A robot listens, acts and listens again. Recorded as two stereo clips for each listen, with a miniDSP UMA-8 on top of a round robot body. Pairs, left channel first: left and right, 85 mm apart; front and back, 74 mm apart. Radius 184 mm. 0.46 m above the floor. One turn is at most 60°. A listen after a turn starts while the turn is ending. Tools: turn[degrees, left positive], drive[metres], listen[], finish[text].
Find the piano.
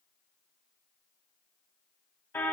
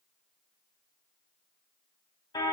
Action: listen[]
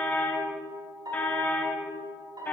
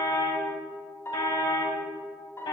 Thought: The piano: 55° right.
Action: turn[-55]
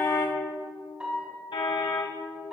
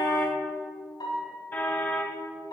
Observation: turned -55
Thought: The piano is now 10° right.
Action: turn[-10]
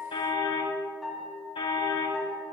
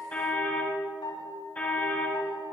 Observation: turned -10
Action: finish[Found it: a piano, straight ahead, over 4 m away.]